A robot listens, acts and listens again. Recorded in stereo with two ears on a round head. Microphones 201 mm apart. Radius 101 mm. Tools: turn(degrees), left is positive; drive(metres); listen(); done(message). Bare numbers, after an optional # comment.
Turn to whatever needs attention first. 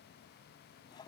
listen()
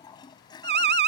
# The alarm: about 45° right or 135° right.
turn(-45)
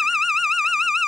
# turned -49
done("Found it: an alarm, straight ahead.")